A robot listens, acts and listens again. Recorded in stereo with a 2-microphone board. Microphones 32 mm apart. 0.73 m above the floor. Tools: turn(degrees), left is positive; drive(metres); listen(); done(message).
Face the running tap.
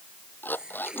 turn(degrees=-25)
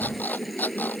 done("Found it: a running tap, straight ahead.")